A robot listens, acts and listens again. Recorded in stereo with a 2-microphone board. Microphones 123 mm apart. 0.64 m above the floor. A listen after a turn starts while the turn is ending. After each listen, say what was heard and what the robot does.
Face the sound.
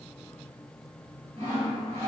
The sawing: about 55° right or 125° right. Turn 55° right.
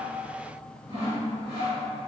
So it is at 55° right. Turn 55° right.
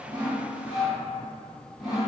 Found it: sawing, straight ahead.